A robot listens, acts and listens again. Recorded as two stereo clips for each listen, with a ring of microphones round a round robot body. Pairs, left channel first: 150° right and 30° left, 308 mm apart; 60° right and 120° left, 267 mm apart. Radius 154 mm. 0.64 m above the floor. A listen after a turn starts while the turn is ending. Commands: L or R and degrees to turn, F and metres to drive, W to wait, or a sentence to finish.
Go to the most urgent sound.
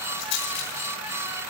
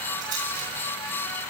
W
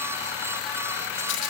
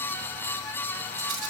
W
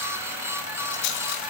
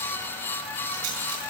I can't make out anything urgent to turn to.